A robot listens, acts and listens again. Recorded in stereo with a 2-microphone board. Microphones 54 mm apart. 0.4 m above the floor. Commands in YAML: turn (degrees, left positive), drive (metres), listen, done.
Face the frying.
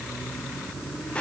listen: true
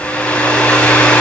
listen: true
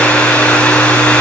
done: "I can't make out frying to turn to."